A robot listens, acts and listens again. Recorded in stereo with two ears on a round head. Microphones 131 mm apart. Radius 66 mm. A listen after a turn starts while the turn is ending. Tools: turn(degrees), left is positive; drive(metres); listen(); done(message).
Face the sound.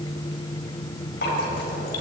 turn(degrees=70)
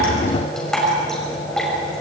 done("Found it: dripping, straight ahead.")